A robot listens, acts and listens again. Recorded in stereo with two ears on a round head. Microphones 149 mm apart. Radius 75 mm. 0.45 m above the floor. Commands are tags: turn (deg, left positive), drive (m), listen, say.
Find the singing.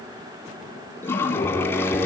<turn deg="-30"/>
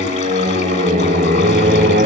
<turn deg="-120"/>
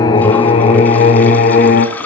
<turn deg="55"/>
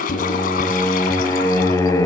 <turn deg="15"/>
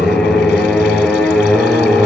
<say>Found it: singing, straight ahead.</say>